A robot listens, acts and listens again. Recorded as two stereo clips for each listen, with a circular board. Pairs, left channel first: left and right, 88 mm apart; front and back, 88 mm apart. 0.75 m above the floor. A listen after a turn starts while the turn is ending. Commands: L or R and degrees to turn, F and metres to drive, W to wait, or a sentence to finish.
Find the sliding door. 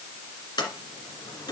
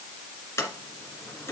L60
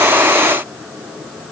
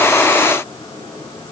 W
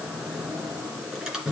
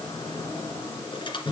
Facing the sliding door, 2 to 4 m away.